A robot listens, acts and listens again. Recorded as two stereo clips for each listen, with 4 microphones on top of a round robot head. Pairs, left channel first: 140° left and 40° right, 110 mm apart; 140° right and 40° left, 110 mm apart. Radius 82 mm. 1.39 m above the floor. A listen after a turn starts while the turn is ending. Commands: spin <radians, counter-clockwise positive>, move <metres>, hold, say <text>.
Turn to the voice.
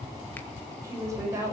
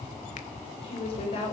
spin -1.75
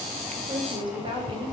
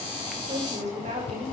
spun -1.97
spin 0.17
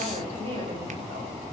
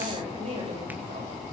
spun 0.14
say Facing the woman speaking.